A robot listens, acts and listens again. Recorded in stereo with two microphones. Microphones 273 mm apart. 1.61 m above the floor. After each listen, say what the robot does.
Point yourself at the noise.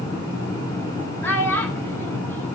Turn 30° left.
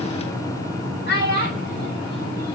Turn 140° left.
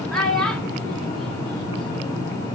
Facing the child speaking.